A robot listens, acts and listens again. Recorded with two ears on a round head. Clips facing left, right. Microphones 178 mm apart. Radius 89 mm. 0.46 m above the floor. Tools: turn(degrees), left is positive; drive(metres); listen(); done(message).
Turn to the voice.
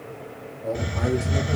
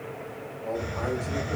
turn(degrees=50)
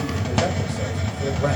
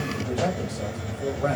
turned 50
turn(degrees=25)
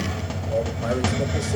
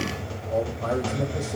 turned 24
turn(degrees=30)
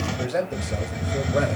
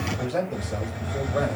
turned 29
turn(degrees=20)
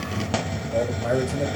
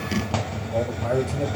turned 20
turn(degrees=10)
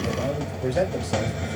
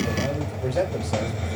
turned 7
done("Found it: a man speaking, straight ahead, 2 to 4 m away.")